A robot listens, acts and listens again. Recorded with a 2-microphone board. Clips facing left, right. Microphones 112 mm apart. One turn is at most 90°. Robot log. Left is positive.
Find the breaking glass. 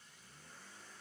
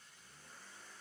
cmd idle
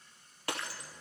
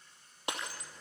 note: The breaking glass: about 20° right or 160° right.
cmd yaw -20
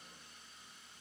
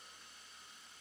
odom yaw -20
cmd idle
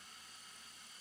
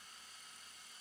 end: I heard breaking glass, but can't make it out now. It was about straight ahead or 140° right.